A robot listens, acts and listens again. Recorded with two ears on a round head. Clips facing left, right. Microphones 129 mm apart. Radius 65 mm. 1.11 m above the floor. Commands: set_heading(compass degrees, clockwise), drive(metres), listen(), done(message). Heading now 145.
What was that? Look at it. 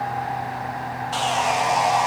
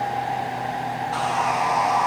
set_heading(110)
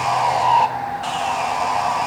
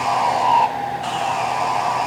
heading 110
done("Facing the sawing.")